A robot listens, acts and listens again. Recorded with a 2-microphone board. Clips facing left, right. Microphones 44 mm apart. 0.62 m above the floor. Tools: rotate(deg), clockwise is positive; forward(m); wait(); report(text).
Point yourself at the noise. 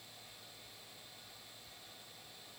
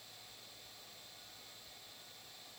wait()
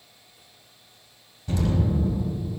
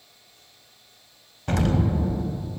rotate(65)
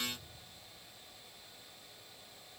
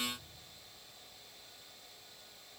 wait()
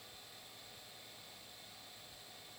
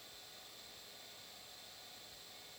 report("I heard an explosion, but can't make it out now. It was about straight ahead or 50° right.")